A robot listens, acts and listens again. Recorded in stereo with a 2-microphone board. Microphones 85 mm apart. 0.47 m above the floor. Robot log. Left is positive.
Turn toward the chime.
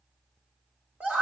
cmd idle
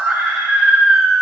cmd idle
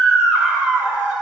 end: I can't make out a chime, only a scream.